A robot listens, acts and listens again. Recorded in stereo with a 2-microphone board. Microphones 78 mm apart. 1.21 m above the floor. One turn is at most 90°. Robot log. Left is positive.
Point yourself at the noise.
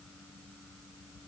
cmd idle
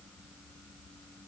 cmd idle
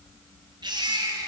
note: The baby crying: about 65° right or 115° right.
cmd yaw -65
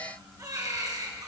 note: So it is at 50° right.
cmd yaw -50
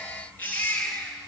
note: The baby crying is now 20° left.
cmd yaw +20
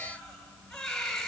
end: Found it: a baby crying, straight ahead.